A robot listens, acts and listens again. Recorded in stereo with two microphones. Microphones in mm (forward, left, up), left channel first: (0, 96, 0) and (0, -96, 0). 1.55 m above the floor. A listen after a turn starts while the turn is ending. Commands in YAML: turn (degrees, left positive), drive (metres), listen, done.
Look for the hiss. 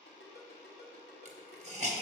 turn: -35
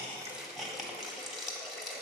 done: "Found it: a hiss, straight ahead, 1 to 2 m away."